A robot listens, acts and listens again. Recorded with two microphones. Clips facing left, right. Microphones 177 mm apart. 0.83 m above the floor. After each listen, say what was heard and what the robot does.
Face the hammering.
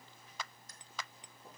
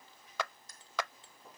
The hammering: about 15° left or 165° left. Turn 15° left.
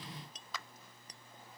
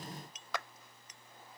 So it is at 145° left. Turn 145° left.
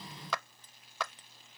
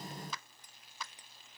The hammering is now 15° right. Turn 15° right.
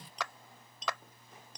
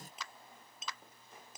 Facing the hammering.